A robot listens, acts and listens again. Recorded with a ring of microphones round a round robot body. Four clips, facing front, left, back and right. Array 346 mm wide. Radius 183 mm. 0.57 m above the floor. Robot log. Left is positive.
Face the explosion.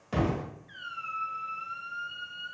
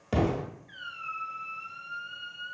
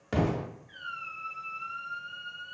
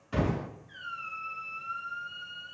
note: The explosion: 115° left.
cmd yaw +115
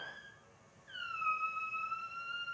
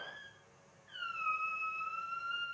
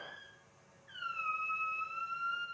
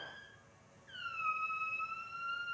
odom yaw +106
note: Nothing new. It was at 10° left.
cmd yaw +10
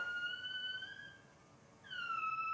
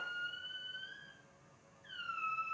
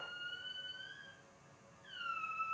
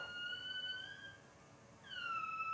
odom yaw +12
end: I heard an explosion from this way, but can't make it out now.